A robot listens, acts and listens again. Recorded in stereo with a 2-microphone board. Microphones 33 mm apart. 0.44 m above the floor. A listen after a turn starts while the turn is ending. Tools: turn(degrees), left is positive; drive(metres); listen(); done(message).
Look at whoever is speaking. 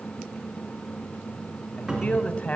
turn(degrees=45)
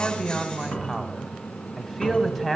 turn(degrees=10)
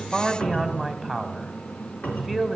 done("Found it: a man speaking, straight ahead, 1 to 2 m away.")